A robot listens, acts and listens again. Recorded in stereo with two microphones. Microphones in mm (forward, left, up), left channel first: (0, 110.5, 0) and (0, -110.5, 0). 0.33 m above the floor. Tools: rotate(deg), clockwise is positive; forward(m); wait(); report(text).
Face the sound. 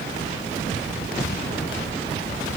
wait()
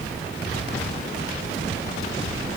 wait()
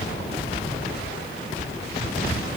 report("I can't make out anything.")